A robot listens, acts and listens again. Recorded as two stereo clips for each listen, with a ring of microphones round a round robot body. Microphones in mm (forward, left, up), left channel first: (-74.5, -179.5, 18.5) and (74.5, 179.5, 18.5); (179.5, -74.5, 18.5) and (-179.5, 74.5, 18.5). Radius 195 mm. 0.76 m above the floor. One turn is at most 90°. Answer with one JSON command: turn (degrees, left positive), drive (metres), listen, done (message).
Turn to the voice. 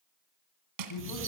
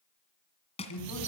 {"turn": -70}
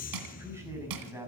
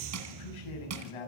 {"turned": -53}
{"turn": -15}
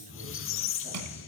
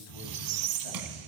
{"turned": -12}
{"listen": true}
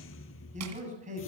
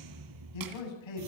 {"done": "Facing the man speaking."}